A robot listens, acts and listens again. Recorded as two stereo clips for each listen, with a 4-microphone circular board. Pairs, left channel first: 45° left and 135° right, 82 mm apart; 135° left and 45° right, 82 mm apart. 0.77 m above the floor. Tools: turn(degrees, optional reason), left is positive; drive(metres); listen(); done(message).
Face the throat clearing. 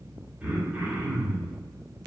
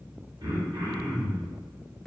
turn(degrees=-70, reason="The throat clearing: 70° right.")
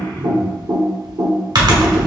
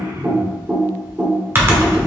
done("Facing the throat clearing, 1 to 2 m away.")